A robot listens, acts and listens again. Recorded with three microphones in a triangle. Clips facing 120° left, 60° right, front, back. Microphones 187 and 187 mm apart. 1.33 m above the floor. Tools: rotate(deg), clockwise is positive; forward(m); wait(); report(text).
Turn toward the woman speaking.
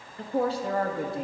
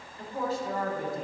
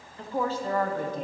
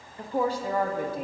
rotate(-100)
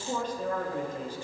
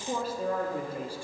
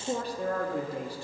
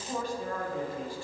rotate(-20)
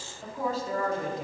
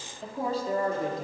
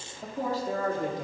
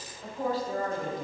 report("Found it: a woman speaking, straight ahead, 2 to 4 m away.")